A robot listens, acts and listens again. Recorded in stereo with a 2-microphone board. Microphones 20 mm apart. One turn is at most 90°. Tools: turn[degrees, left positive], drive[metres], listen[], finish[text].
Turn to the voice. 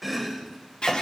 Action: listen[]
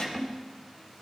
Action: listen[]
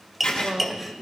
Thought: The woman speaking: about 70° right or 110° right.
Action: turn[-70]
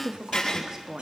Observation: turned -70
Thought: So it is at 25° right.
Action: turn[-25]
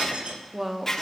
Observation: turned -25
Thought: The woman speaking is now 10° right.
Action: turn[-10]
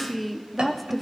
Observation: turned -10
Action: finish[Found it: a woman speaking, straight ahead.]